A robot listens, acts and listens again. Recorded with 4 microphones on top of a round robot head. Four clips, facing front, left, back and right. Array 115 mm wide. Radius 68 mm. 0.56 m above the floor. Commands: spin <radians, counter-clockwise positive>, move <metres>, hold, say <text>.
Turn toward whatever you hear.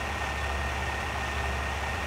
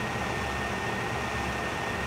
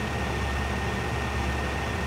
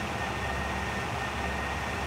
hold
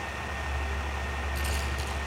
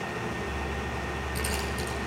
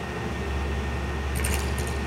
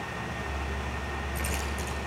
spin 2.53
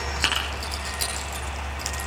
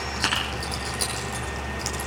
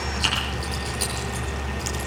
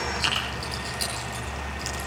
spin 0.87
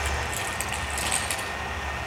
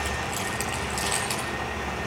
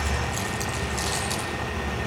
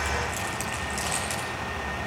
spin 0.44
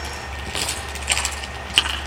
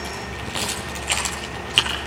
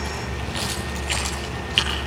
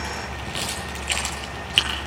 say Found it: keys jangling, straight ahead.